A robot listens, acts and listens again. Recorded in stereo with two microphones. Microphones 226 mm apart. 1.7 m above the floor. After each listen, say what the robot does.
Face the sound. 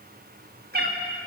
Turn 45° right.
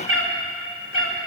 Turn 70° right.
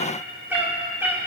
Turn 10° right.
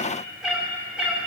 Facing the cat meowing, 2 to 4 m away.